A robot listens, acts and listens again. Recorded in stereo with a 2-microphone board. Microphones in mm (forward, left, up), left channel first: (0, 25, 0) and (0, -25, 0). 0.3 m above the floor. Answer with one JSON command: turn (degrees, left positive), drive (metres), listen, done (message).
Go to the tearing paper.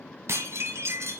{"listen": true}
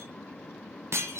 {"listen": true}
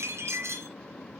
{"done": "I can't make out tearing paper, only dishes clattering."}